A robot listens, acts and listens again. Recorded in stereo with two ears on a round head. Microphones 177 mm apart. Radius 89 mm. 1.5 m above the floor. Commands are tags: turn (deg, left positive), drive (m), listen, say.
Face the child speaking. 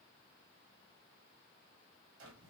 <listen/>
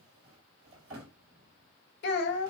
<turn deg="55"/>
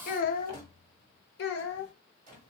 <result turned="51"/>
<turn deg="60"/>
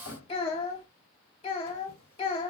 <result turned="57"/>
<turn deg="25"/>
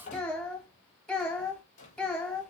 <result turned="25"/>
<say>Facing the child speaking.</say>